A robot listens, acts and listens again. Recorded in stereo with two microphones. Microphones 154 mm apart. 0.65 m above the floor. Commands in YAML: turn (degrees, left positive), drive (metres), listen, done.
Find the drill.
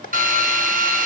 turn: -65
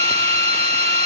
turn: -45
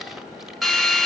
done: "Found it: a drill, straight ahead, 1 to 2 m away."